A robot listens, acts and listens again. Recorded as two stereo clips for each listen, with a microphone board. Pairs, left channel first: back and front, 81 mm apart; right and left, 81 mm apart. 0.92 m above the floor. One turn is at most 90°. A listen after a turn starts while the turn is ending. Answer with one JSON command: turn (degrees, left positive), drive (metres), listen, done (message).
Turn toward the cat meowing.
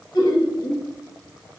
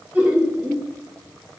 {"listen": true}
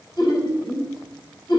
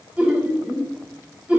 {"listen": true}
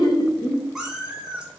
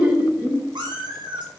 {"turn": 80}
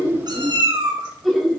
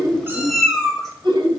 {"done": "Facing the cat meowing."}